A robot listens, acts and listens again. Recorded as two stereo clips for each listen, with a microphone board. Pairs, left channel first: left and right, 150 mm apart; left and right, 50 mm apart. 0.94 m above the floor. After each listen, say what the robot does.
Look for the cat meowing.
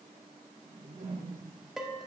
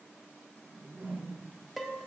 Keep listening.
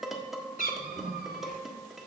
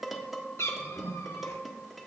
Turn 90° left.
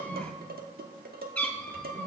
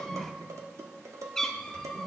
Facing the cat meowing.